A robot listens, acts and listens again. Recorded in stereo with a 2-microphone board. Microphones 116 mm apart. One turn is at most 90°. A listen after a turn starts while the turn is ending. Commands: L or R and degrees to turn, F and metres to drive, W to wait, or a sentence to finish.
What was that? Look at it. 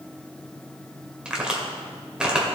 R30
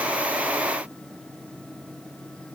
W
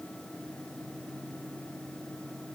I heard a crack, but can't make it out now. It was about 20° left or 140° right.